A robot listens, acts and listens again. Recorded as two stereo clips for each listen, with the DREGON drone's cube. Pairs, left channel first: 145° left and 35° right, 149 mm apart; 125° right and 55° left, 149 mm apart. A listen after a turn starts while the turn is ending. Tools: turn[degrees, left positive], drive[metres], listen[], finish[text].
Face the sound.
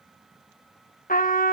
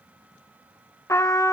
Thought: The trumpet: 165° left.
Action: turn[165]
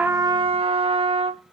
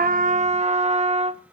Thought: The trumpet is now 15° left.
Action: turn[15]
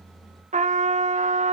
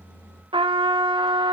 Action: finish[Facing the trumpet.]